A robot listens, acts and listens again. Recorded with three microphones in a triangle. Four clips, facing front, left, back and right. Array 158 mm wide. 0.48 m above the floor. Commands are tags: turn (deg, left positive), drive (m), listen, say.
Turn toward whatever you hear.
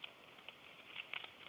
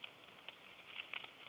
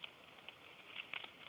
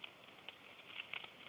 <listen/>
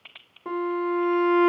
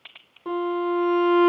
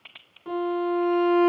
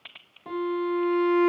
<turn deg="50"/>
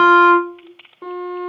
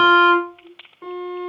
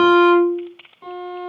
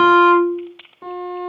<say>Facing the violin, under 1 m away.</say>